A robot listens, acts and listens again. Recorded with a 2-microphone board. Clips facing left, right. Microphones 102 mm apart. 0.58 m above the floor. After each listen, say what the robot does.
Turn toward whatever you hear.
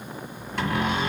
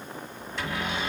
Turn 55° left.
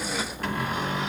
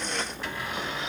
Turn 60° left.
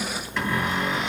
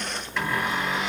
Found it: a cupboard door, straight ahead, 1 to 2 m away.